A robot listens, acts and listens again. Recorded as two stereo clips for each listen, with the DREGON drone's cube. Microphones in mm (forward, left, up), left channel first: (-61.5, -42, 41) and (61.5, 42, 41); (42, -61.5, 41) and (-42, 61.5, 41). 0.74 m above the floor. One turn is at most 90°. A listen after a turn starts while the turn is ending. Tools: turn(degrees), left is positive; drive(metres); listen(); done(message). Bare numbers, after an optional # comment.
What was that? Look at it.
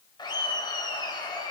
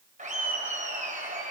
# The laughter: 155° left.
turn(90)
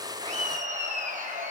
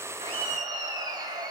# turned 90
# The laughter is now 60° left.
turn(60)
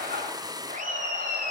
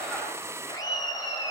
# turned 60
done("Found it: laughter, straight ahead.")